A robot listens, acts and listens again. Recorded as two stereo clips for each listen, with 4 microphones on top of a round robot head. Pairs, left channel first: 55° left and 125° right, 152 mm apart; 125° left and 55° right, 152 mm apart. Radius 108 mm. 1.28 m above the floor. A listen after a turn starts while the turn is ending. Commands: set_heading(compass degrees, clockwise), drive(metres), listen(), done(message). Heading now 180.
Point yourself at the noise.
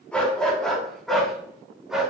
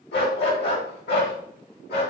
set_heading(35)
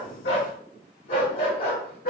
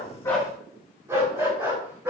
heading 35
set_heading(15)
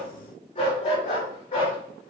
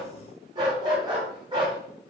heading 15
done("Facing the dog barking.")